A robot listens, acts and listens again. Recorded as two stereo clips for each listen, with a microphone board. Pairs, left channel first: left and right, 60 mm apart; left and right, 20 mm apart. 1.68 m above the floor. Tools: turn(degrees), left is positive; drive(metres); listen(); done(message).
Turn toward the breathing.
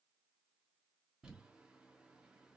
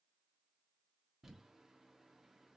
listen()
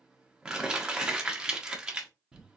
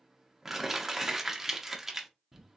listen()
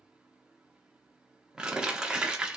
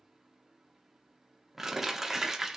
done("I can't make out breathing to turn to.")